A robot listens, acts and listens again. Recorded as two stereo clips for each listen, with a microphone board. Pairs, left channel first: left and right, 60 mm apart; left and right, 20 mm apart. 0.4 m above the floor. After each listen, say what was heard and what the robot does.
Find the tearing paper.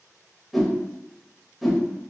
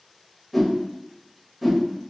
Keep listening.
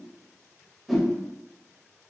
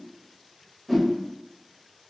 Keep listening.
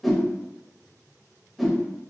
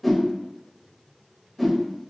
I can't make out tearing paper, only a whoosh.